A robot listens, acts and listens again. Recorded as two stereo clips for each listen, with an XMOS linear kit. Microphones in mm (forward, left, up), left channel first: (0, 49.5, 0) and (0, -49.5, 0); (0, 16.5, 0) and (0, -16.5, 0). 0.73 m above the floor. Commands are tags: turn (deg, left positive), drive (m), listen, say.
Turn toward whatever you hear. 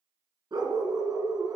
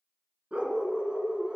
<turn deg="-35"/>
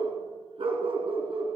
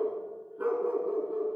<turn deg="-120"/>
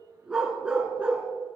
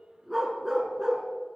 <turn deg="-15"/>
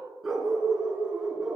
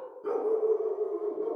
<turn deg="-10"/>
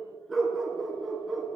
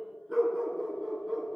<say>Facing the dog barking.</say>